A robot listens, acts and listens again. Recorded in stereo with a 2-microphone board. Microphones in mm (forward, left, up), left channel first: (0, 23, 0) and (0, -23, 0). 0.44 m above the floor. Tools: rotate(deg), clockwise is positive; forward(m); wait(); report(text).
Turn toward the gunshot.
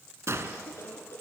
rotate(90)
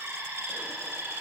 report("I heard a gunshot from this way, but can't make it out now.")